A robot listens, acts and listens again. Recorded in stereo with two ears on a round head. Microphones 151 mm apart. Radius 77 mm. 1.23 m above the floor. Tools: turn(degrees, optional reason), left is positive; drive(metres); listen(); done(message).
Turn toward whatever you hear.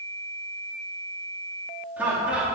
turn(degrees=-30)
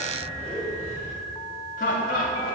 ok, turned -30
turn(degrees=55, reason="So it is at 55° left.")
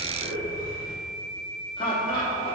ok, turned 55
turn(degrees=30, reason="The laughter is now 30° left.")
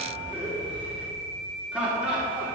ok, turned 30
done("Facing the laughter, 2 to 4 m away.")